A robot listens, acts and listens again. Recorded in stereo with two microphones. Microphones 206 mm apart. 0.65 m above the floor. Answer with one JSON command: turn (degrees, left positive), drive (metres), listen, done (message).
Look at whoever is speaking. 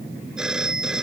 {"listen": true}
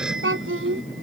{"turn": -90}
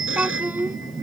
{"turn": -10}
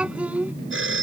{"done": "Facing the child speaking."}